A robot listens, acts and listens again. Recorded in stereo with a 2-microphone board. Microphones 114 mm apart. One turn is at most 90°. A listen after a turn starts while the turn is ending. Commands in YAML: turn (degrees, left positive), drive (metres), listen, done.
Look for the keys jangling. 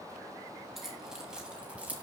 turn: -30
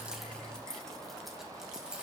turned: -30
turn: -30
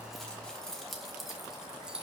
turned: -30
turn: -30
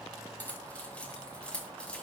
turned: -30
turn: 10
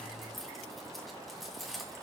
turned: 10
done: "Found it: keys jangling, straight ahead, 2 to 4 m away."